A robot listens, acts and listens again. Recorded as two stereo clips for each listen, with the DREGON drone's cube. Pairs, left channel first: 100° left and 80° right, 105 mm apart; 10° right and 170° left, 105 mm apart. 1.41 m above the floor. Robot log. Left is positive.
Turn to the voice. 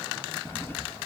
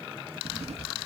cmd idle
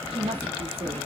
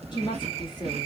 note: The woman speaking: 55° right.
cmd yaw -55
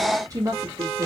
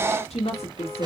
note: The woman speaking is now 30° right.
cmd yaw -30
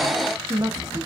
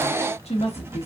note: The woman speaking is now 25° right.
cmd yaw -25
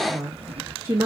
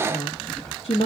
note: The woman speaking is now 15° right.
cmd yaw -15
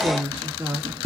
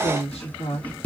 note: The woman speaking is now 10° right.
cmd yaw -10
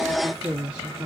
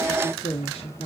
end: Found it: a woman speaking, straight ahead, 1 to 2 m away.